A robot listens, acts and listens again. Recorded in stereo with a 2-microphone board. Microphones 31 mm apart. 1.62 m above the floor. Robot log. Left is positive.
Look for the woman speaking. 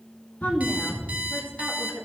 cmd yaw +90
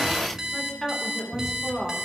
note: So it is at 10° left.
cmd yaw +10
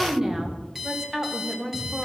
note: The woman speaking is now 15° right.
cmd yaw -15
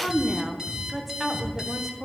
end: Found it: a woman speaking, straight ahead, 1 to 2 m away.